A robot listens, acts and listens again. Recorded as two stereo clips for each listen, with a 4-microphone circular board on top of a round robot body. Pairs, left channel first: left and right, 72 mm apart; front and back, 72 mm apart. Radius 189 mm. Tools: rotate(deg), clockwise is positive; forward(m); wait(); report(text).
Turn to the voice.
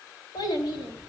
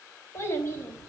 rotate(-55)
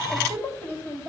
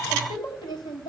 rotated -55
rotate(-15)
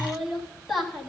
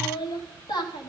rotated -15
report("Found it: a child speaking, straight ahead.")